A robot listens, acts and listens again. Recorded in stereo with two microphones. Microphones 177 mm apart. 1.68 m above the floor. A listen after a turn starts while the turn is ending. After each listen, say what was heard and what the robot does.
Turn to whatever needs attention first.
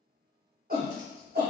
The shout: about 55° right or 125° right. Turn 55° right.
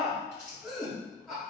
Found it: a shout, straight ahead.